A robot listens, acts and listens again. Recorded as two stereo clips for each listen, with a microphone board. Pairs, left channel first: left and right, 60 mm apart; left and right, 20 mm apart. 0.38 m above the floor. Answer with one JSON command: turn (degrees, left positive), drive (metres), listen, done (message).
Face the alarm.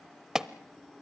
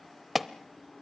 {"turn": -30}
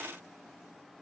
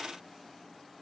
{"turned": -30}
{"listen": true}
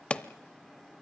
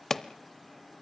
{"turn": 25}
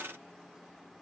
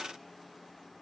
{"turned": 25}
{"listen": true}
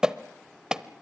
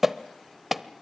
{"turn": -15}
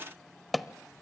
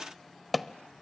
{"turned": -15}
{"done": "Found it: an alarm, straight ahead, under 1 m away."}